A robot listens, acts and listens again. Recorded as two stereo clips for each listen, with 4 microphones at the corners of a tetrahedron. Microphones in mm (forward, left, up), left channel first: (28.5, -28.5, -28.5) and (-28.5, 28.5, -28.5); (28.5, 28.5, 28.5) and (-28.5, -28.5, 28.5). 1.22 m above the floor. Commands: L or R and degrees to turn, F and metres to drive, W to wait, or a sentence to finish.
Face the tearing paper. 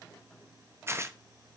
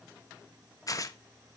L80
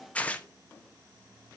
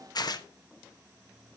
L25
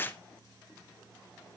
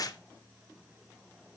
L15
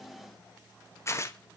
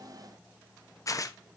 Found it: tearing paper, straight ahead.